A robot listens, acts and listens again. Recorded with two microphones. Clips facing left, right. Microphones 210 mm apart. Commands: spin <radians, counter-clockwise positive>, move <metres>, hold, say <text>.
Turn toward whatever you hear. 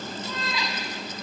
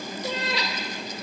spin -1.57
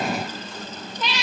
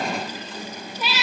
spin -0.17
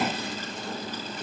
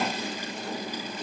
hold
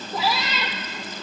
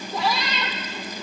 say Found it: a cat meowing, straight ahead.